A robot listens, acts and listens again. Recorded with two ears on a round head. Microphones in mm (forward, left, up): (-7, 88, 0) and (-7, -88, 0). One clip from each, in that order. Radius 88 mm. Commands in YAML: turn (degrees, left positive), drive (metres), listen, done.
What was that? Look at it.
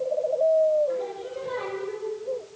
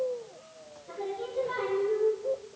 turn: -30
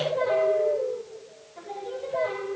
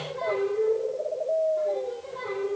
turn: 25
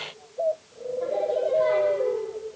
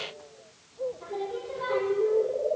turn: 10
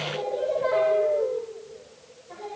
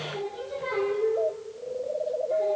done: "Found it: singing, straight ahead, over 4 m away."